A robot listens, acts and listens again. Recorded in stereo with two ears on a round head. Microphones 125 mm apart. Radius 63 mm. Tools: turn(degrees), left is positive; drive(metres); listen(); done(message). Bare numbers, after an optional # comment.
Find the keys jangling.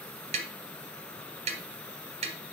listen()
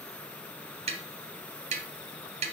listen()
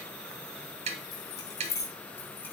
# The keys jangling: about 20° left or 160° left.
turn(20)
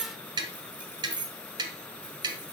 # So it is at 10° right.
turn(-10)
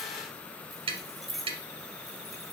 done("Found it: keys jangling, straight ahead.")